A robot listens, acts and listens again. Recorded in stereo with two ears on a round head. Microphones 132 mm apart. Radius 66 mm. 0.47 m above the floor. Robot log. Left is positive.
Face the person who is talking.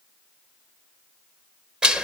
cmd idle
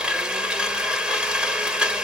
cmd idle
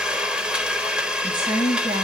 note: The woman speaking: about 30° right or 150° right.
cmd yaw -30
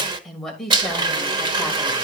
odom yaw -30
end: Facing the woman speaking.